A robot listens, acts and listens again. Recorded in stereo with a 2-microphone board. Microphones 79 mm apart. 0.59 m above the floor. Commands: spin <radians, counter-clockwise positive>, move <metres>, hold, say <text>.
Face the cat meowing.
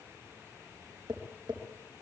hold
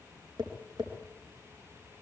hold
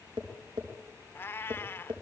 spin 0.52
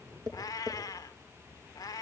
spin 2.18
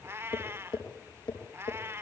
spin -0.61
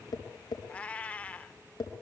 spin 0.35
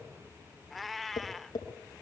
say Facing the cat meowing, under 1 m away.